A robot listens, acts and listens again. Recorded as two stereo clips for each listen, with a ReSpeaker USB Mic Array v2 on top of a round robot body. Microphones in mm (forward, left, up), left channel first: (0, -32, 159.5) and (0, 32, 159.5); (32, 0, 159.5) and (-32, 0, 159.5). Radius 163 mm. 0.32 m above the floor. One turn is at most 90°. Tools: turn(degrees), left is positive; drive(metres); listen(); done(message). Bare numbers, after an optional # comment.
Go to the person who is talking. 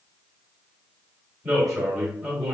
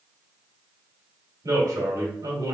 # The man speaking: 170° left.
turn(90)
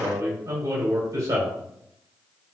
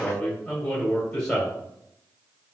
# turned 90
# The man speaking is now 80° left.
turn(80)
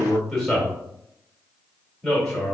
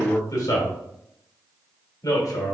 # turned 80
drive(1.0)
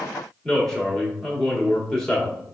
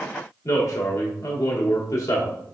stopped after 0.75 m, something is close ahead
# The man speaking is now 10° right.
turn(-10)
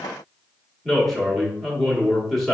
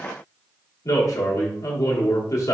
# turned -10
done("Arrived at the man speaking, straight ahead.")